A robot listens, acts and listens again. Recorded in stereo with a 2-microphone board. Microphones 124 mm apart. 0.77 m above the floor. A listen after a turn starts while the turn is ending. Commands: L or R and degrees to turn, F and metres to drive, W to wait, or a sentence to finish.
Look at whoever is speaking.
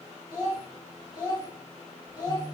L35
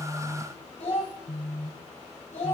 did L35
L110
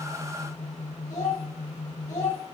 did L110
L30
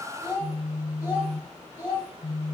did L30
R20
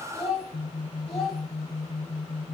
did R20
Facing the child speaking, 2 to 4 m away.